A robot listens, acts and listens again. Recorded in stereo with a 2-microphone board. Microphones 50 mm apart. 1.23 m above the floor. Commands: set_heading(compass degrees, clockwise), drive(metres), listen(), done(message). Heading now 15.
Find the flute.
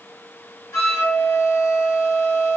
set_heading(300)
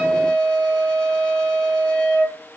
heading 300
set_heading(280)
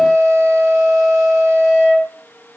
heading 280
done("Found it: a flute, straight ahead.")